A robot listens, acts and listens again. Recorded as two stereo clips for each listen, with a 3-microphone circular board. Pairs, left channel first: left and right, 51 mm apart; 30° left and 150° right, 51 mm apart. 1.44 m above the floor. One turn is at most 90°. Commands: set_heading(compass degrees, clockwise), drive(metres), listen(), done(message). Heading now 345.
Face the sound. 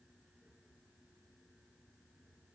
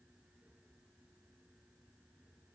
listen()
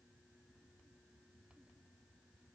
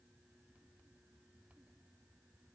listen()
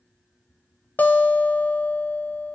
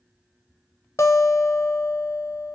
set_heading(305)
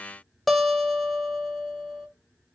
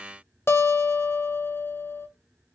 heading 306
done("Facing the guitar, under 1 m away.")